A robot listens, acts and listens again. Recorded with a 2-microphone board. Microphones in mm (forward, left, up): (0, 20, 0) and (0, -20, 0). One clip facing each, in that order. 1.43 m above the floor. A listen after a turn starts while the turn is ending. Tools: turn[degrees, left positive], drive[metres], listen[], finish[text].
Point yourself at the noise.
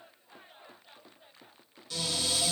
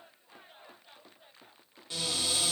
Thought: The cupboard door: about 30° right or 150° right.
Action: turn[-30]
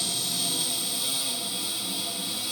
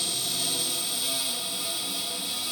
Thought: So it is at 120° right.
Action: turn[-120]
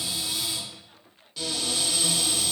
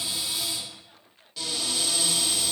Action: finish[Found it: a cupboard door, straight ahead, 1 to 2 m away.]